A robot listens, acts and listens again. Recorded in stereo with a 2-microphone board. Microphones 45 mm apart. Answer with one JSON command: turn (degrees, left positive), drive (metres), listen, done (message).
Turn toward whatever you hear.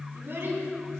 {"turn": -55}
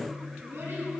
{"turn": -75}
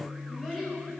{"done": "Found it: a child speaking, straight ahead, over 4 m away."}